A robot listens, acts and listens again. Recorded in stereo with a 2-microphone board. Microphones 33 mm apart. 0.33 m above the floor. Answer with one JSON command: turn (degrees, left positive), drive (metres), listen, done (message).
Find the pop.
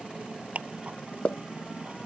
{"turn": 40}
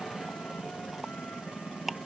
{"listen": true}
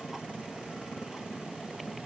{"done": "I heard a pop, but can't make it out now. It was about straight ahead or 100° left."}